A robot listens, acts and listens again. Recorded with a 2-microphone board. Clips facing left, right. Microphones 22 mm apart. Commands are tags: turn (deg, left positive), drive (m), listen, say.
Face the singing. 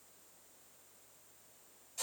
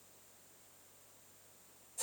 <listen/>
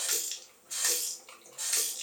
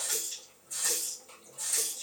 <listen/>
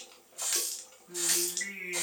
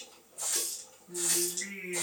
<turn deg="60"/>
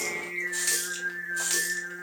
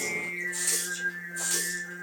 <turn deg="55"/>
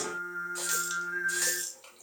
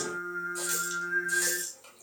<turn deg="30"/>
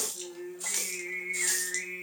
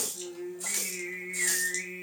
<turn deg="15"/>
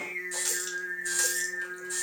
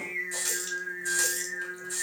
<say>Found it: singing, straight ahead.</say>